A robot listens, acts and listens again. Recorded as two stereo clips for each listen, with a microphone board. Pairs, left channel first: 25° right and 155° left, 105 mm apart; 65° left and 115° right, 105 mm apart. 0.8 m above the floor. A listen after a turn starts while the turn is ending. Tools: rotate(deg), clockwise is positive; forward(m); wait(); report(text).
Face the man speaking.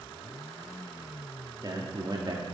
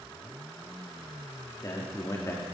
rotate(-125)
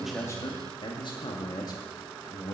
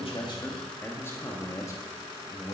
rotate(-30)
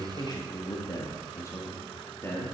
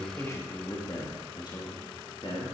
rotate(-40)
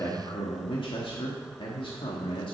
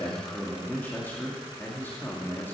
report("Found it: a man speaking, straight ahead, 1 to 2 m away.")